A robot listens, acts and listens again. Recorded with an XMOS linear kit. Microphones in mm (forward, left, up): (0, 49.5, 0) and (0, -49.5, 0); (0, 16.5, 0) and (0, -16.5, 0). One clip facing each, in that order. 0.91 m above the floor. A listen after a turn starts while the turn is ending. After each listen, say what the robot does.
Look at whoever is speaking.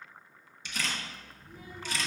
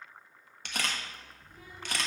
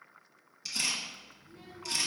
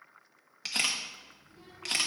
Turn 70° left.
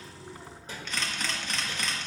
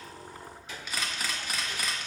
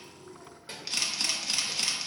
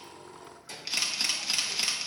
Turn 40° left.
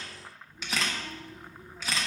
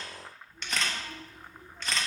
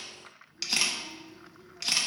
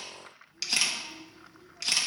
Turn 25° left.
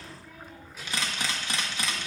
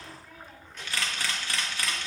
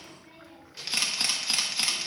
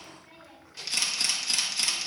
Turn 10° left.
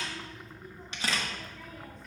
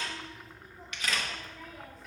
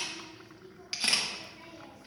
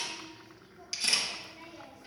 Found it: a child speaking, straight ahead, 2 to 4 m away.